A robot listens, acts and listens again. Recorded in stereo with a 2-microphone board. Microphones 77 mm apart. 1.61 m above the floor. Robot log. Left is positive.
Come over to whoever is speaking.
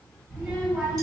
cmd yaw -30
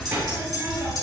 note: So it is at 130° right.
cmd yaw -130
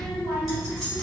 note: The child speaking is now 50° right.
cmd yaw -50
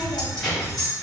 note: The child speaking is now 10° left.
cmd yaw +10
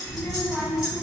cmd fwd 1.0
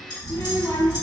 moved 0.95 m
cmd fwd 1.0
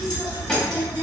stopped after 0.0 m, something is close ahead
note: The child speaking is now 10° left.
cmd yaw +10
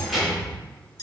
end: Arrived at the child speaking, straight ahead.